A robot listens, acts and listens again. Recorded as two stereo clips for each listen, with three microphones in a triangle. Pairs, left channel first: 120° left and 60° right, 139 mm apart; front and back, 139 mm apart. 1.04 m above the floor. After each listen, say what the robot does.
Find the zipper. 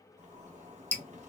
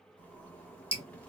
Turn 75° right.
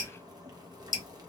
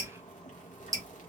Facing the zipper.